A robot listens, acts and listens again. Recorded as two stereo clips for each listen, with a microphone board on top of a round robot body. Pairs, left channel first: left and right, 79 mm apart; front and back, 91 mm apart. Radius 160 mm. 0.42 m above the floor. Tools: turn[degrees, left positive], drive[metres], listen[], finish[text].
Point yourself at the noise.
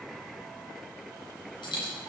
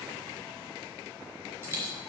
Thought: The dropped coin: 115° left.
Action: turn[115]
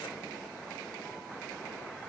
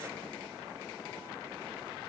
Action: finish[I heard a dropped coin from this way, but can't make it out now.]